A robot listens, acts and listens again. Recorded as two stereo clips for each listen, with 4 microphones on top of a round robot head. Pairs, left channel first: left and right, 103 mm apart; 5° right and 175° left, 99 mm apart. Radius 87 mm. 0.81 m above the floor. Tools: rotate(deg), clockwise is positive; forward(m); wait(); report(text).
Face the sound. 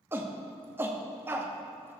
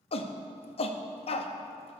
rotate(20)
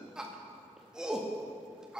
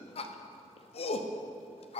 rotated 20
report("Facing the shout.")